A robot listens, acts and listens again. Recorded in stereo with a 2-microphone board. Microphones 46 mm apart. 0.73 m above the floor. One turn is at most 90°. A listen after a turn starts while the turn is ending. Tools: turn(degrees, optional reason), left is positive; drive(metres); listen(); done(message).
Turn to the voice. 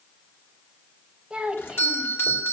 turn(degrees=-20, reason="The child speaking: about 20° right or 160° right.")
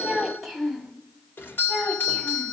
turn(degrees=-30)
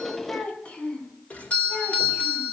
turn(degrees=25, reason="So it is at 25° left.")
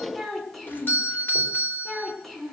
done("Found it: a child speaking, straight ahead.")